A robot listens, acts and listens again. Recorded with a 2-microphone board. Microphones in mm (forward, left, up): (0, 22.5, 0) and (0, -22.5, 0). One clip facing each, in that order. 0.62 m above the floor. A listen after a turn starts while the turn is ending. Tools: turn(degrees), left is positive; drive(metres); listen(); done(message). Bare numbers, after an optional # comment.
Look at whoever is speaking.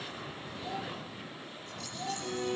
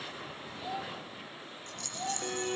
turn(-30)
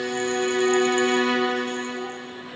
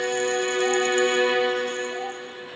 listen()
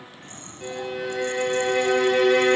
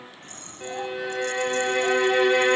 listen()
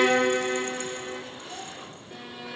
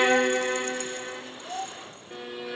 # So it is at 140° right.
turn(-140)
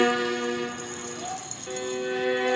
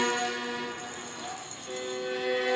# The child speaking is now 20° left.
turn(20)
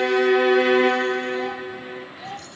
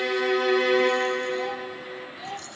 done("Facing the child speaking, 1 to 2 m away.")